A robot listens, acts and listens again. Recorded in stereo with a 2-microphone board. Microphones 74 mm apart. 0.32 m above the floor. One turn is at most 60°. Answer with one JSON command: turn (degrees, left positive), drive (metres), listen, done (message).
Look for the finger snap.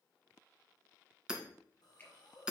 {"turn": 25}
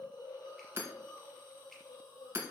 {"listen": true}
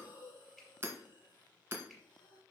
{"done": "Found it: a finger snap, straight ahead."}